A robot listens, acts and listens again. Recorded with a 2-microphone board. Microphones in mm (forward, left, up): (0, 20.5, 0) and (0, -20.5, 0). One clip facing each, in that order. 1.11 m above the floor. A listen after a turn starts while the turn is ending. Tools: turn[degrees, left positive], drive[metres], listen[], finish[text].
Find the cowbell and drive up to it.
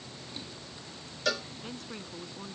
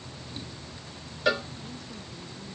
Thought: The cowbell: about 20° right or 160° right.
Action: turn[-20]
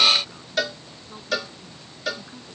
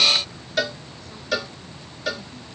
Action: drive[1.0]
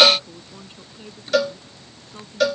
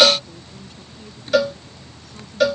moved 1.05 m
Action: drive[1.0]
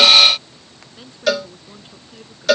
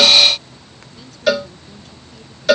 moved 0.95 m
Action: drive[1.0]
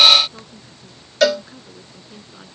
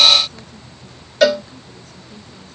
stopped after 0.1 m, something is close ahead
Action: finish[I am next to the cowbell.]